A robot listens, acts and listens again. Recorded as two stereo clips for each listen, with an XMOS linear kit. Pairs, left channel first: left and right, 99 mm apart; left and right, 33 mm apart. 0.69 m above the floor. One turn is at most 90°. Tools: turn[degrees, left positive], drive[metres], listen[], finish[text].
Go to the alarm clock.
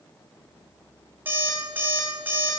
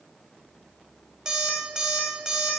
Thought: The alarm clock: about 20° right or 160° right.
Action: turn[-20]
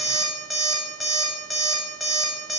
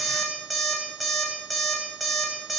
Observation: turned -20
Action: drive[1.0]
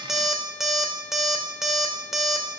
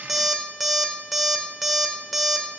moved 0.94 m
Action: drive[1.0]
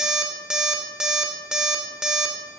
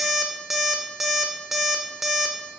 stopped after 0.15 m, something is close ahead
Action: finish[I am next to the alarm clock.]